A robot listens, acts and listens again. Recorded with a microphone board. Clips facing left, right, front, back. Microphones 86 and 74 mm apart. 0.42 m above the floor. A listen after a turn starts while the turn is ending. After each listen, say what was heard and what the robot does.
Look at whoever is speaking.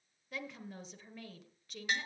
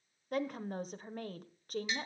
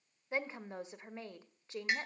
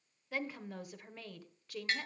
The woman speaking: 60° right. Turn 60° right.
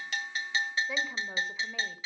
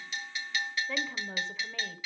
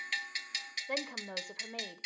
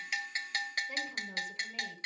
The woman speaking is now 10° left. Turn 10° left.
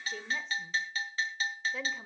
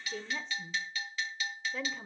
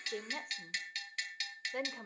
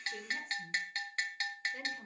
Found it: a woman speaking, straight ahead, 1 to 2 m away.